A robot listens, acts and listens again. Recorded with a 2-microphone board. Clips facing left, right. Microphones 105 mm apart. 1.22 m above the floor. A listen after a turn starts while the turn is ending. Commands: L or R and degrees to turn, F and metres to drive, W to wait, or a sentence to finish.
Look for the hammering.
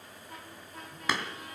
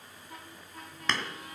L30
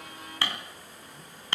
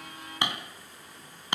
R20
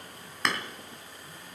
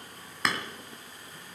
Found it: hammering, straight ahead.